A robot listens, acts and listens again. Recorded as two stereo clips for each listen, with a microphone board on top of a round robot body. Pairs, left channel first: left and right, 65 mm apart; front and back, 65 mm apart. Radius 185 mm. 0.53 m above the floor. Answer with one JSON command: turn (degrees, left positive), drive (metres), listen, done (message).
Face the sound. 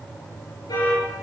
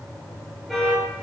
{"turn": 90}
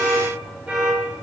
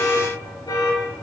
{"turn": -15}
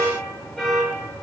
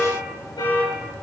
{"done": "Facing the alarm."}